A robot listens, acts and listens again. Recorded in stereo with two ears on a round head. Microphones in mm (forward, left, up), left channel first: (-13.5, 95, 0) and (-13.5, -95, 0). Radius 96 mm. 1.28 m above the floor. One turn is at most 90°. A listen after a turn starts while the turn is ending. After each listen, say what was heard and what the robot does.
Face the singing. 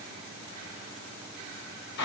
Keep listening.
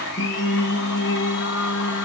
The singing: about 75° left or 105° left. Turn 75° left.
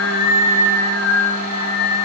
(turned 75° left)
So it is at 30° left. Turn 30° left.
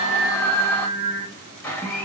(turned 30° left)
Facing the singing.